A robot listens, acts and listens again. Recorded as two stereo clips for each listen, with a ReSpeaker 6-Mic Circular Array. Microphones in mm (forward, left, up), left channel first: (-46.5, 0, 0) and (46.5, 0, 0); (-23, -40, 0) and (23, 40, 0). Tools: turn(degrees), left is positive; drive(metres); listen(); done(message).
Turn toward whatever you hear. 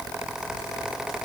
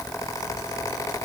listen()
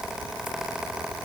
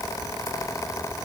listen()
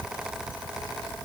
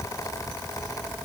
done("I can't make out anything.")